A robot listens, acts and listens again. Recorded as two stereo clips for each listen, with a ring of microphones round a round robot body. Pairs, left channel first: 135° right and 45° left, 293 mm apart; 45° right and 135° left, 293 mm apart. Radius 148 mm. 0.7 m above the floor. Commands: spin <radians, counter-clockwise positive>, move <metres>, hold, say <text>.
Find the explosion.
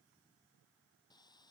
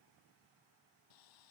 hold
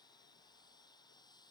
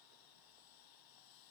hold
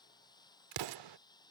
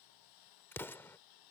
spin 0.70
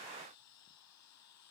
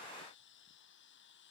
say I heard an explosion from this way, but can't make it out now.